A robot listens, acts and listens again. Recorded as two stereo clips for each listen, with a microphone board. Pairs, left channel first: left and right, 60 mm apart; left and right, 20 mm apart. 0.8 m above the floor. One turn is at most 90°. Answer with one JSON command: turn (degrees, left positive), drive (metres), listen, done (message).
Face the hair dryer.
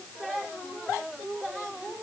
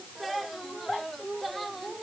{"listen": true}
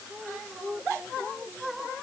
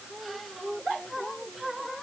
{"listen": true}
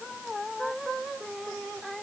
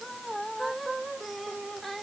{"done": "I can't make out a hair dryer."}